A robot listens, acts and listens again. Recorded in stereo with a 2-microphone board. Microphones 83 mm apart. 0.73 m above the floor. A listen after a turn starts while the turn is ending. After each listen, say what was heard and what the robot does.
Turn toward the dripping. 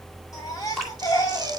Turn 30° left.
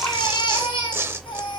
Keep listening.
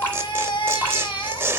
So it is at 150° left. Turn 150° left.
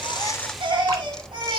Keep listening.
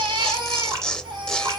The dripping is now 50° right. Turn 50° right.
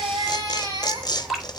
Facing the dripping, 2 to 4 m away.